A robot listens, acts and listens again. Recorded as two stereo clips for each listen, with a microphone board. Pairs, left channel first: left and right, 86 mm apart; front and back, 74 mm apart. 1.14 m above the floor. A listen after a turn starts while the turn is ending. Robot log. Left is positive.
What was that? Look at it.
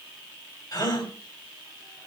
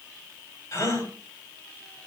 note: The gasp: 50° left.
cmd yaw +50
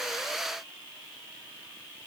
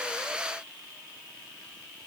end: Facing where the gasp came from. I can't hear it now.